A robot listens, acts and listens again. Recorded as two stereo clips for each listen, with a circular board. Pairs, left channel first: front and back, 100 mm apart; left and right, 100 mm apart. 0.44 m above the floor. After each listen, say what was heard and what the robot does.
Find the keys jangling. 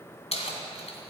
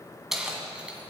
The keys jangling: 10° right. Turn 10° right.
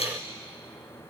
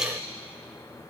Facing the keys jangling, 2 to 4 m away.